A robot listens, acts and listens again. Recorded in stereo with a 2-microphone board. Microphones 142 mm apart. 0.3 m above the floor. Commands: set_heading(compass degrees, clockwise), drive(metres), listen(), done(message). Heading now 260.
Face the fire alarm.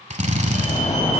set_heading(200)
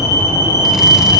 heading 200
set_heading(175)
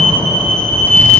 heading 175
set_heading(165)
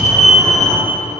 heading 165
done("Found it: a fire alarm, straight ahead.")